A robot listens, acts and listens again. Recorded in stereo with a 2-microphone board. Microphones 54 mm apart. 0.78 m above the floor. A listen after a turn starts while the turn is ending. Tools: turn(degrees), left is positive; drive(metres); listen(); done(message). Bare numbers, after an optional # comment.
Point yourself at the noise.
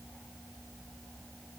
listen()
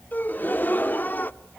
# The gasp: about 40° left or 140° left.
turn(40)
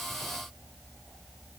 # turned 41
listen()
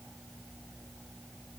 done("I heard a gasp, but can't make it out now. It was about straight ahead or 100° left.")